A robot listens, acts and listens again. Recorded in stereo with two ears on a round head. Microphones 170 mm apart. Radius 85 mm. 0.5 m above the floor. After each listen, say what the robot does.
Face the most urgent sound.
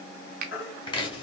Turn 70° left.
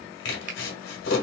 Keep listening.
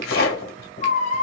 Turn 40° left.
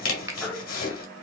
Turn 10° left.
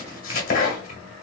Keep listening.
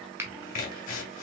Keep listening.
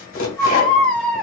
Turn 10° left.
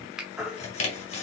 Facing the baby crying.